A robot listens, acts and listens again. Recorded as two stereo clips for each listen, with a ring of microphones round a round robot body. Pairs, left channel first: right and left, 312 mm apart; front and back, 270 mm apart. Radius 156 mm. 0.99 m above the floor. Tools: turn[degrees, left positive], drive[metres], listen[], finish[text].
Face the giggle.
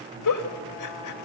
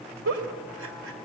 Thought: The giggle: 125° right.
Action: turn[-125]
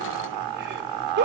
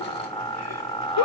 Thought: The giggle is now 30° left.
Action: turn[30]
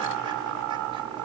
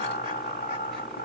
Action: listen[]
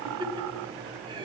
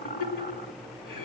Thought: The giggle is now 15° left.
Action: turn[15]
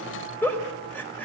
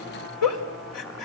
Action: finish[Found it: a giggle, straight ahead, 2 to 4 m away.]